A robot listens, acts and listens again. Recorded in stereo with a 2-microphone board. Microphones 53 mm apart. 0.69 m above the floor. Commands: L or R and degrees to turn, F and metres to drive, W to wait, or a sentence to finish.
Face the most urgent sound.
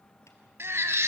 R55
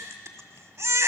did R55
R70
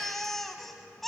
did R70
Facing the baby crying.